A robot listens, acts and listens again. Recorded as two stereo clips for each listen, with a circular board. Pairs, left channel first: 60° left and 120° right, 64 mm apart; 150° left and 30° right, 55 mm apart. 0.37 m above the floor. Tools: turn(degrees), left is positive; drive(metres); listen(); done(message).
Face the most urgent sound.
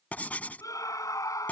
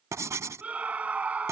turn(degrees=35)
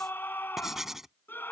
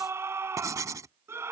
done("Facing the scream.")